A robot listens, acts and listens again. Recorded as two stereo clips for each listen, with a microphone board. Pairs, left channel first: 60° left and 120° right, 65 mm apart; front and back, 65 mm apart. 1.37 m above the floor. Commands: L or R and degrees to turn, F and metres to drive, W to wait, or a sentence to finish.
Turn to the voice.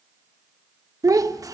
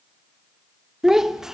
R100
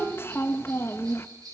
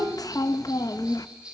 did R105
L10
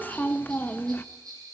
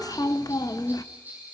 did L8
Facing the child speaking.